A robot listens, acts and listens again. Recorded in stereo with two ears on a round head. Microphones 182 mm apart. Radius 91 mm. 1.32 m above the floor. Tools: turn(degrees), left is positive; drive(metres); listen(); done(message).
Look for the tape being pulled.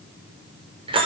listen()
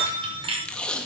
turn(degrees=30)
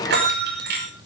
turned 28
listen()
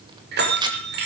turn(degrees=-20)
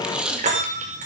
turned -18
done("Found it: tape being pulled, straight ahead.")